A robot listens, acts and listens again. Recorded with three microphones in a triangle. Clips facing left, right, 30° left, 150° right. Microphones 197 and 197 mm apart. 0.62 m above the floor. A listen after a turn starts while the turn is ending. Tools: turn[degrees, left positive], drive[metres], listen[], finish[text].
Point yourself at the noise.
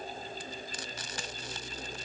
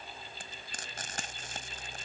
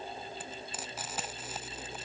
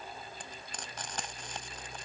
Thought: The frying: 55° right.
Action: turn[-55]
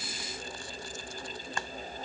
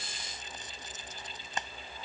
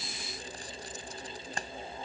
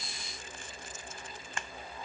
Thought: The frying is now 20° right.
Action: turn[-20]
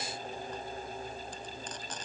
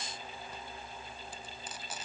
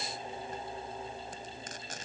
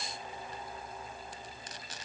Thought: The frying is now 10° right.
Action: turn[-10]
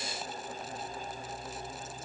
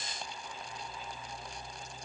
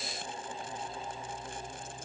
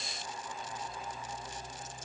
Action: listen[]
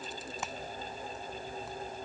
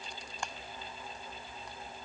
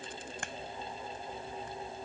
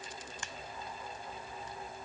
Action: finish[Facing the frying.]